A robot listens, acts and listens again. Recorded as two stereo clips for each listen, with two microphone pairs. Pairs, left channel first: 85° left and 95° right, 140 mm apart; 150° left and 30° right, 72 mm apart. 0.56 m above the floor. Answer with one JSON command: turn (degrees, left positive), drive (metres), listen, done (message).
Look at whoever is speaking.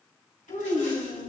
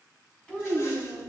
{"turn": 75}
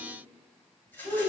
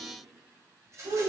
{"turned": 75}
{"turn": -25}
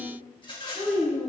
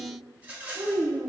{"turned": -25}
{"done": "Found it: a child speaking, straight ahead."}